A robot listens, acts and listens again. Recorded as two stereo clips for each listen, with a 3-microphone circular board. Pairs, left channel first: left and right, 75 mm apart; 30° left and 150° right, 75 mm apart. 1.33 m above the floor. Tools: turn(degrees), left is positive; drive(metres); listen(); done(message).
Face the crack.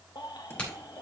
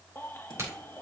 turn(degrees=165)
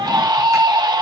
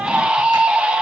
done("I heard a crack from this way, but can't make it out now.")